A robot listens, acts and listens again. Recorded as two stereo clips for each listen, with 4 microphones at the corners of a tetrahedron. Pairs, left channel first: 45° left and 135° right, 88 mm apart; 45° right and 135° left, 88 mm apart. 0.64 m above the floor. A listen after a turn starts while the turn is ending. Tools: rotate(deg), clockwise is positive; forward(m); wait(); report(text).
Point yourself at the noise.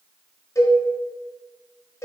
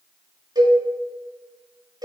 rotate(-95)
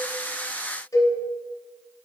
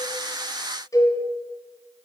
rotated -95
report("Facing the cowbell.")